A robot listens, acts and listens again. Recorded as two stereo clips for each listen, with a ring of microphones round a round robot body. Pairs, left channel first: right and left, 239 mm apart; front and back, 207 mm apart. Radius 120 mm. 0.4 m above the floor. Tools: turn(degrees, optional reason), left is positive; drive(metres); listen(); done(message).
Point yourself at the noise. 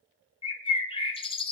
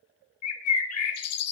turn(degrees=-20, reason="The bird: 20° right.")
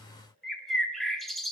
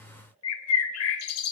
done("Found it: a bird, straight ahead.")